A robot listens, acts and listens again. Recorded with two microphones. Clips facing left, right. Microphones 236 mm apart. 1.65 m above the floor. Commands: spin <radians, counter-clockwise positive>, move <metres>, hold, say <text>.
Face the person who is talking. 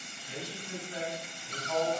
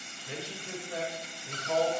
spin -1.57
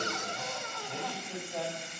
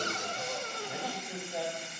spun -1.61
say Found it: a man speaking, straight ahead, over 4 m away.